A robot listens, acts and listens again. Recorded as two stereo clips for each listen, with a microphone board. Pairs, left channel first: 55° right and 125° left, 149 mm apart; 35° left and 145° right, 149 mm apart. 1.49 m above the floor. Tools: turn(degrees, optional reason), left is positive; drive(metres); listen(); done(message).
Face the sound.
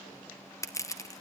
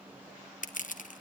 turn(degrees=10, reason="The crushing: 10° left.")
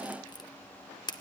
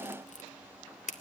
done("Found it: crushing, straight ahead.")